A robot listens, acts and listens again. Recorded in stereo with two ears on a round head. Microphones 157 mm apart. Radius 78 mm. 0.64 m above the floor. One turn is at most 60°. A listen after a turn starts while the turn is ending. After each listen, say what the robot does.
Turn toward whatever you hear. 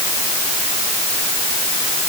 Keep listening.
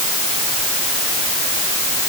Keep listening.
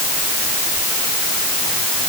I can't make out anything to turn to.